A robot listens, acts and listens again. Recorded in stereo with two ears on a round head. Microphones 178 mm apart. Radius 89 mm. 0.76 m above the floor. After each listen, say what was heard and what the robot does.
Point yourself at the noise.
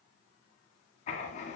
The writing: about 35° left or 145° left. Turn 35° left.
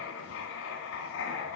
So it is at 105° left. Turn 105° left.
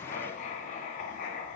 The writing is now 40° left. Turn 40° left.
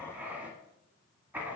The writing is now 10° right. Turn 10° right.
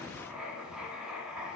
Facing the writing, 1 to 2 m away.